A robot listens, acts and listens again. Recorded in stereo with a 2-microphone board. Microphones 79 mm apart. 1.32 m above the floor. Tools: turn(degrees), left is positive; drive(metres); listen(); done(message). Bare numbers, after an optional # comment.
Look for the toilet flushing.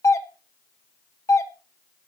listen()
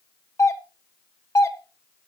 listen()
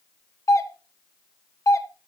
done("I can't make out a toilet flushing, only a doorbell.")